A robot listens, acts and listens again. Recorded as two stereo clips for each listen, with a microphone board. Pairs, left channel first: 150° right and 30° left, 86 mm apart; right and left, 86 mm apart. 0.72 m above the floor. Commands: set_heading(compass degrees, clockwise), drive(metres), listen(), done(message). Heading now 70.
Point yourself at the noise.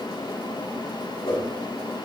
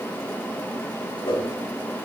set_heading(195)
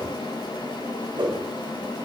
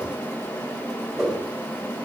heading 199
done("Found it: a whoosh, straight ahead.")